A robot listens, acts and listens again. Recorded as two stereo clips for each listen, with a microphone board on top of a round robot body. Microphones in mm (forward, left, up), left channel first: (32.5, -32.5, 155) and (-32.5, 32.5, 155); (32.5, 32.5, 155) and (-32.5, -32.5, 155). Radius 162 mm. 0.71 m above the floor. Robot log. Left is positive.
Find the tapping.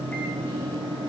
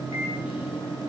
cmd idle
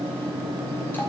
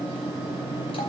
cmd idle
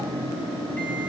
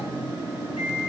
end: I can't make out tapping.